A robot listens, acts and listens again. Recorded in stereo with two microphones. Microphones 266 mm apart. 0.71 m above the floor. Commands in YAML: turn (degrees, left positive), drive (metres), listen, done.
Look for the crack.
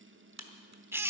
turn: -90
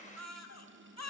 done: "Facing where the crack came from. I can't hear it now."